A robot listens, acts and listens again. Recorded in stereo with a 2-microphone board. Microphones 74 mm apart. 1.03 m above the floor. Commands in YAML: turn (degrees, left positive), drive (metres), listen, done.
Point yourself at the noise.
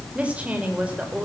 turn: -20
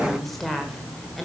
done: "Found it: a woman speaking, straight ahead."